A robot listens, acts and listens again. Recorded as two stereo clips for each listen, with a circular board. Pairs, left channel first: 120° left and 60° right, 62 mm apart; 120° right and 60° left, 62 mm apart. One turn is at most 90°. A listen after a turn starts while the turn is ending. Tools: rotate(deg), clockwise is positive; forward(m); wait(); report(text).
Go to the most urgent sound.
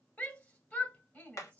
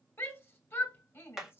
rotate(90)
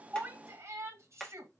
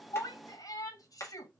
rotate(90)
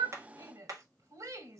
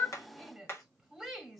rotate(30)
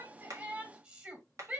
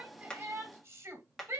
rotate(-10)
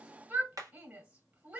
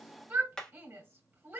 forward(1.0)
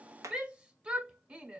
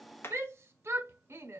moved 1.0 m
rotate(-15)
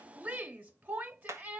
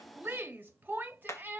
forward(1.0)
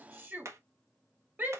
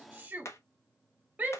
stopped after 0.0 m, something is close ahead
report("Arrived at the shout, straight ahead.")